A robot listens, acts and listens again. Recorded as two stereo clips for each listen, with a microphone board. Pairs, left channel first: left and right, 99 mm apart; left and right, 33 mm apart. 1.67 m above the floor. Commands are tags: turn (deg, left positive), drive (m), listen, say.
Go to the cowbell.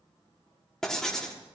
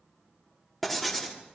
<listen/>
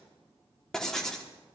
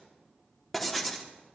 <listen/>
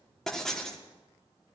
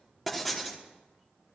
<say>I can't make out a cowbell, only writing.</say>